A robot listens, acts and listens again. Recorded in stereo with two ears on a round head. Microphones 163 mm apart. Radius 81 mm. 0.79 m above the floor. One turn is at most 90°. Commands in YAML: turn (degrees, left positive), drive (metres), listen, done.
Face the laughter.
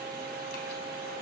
listen: true
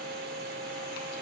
listen: true
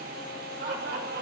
turn: -55
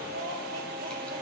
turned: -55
turn: -70
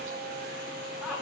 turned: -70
done: "Facing the laughter."